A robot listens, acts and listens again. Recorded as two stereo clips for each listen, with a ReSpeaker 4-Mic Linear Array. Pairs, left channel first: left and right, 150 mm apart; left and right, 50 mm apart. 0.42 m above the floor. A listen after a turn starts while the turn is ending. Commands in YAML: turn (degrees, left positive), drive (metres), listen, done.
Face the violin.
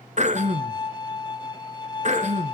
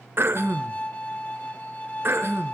turn: 30
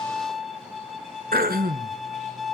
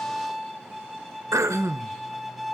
done: "Found it: a violin, straight ahead, 1 to 2 m away."